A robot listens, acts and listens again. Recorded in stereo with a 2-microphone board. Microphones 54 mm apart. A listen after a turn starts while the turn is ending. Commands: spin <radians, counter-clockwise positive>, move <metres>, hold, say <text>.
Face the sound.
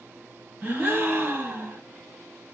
spin -0.70
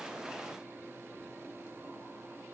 hold
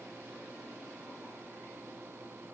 say I heard a gasp, but can't make it out now. It was about straight ahead or 100° right.